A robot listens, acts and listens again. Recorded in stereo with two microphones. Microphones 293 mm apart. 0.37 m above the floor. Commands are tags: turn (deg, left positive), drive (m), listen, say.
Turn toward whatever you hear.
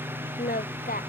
<turn deg="30"/>
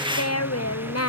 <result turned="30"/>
<turn deg="125"/>
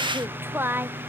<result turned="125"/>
<say>Found it: singing, straight ahead.</say>